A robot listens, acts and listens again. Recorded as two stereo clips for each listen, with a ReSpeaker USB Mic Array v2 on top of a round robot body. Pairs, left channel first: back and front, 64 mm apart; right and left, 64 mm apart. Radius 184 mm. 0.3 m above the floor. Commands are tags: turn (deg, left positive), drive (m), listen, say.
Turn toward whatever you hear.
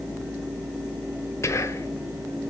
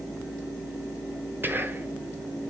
<turn deg="140"/>
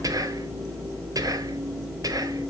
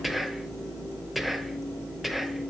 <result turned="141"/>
<say>Facing the whispering.</say>